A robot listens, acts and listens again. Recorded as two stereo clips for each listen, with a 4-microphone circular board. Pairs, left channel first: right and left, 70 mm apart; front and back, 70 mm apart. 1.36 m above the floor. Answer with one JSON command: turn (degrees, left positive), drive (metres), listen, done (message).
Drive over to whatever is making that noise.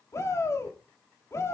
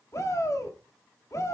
{"turn": -45}
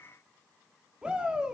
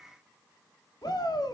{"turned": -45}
{"turn": 15}
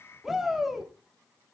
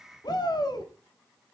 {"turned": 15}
{"drive": 1.0}
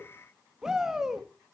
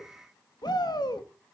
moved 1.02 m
{"turn": 10}
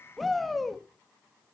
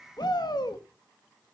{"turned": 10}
{"drive": 1.0}
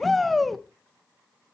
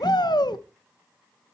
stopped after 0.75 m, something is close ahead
{"done": "Arrived at the shout, straight ahead."}